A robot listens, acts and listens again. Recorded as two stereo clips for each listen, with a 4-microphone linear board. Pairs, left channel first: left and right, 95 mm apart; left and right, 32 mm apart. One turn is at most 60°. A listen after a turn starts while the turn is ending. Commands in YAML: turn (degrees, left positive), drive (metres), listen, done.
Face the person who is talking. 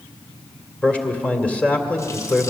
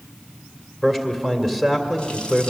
turn: 30
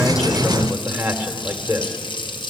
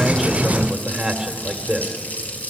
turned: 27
turn: -15
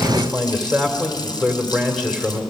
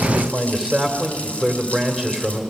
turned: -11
done: "Found it: a man speaking, straight ahead, 2 to 4 m away."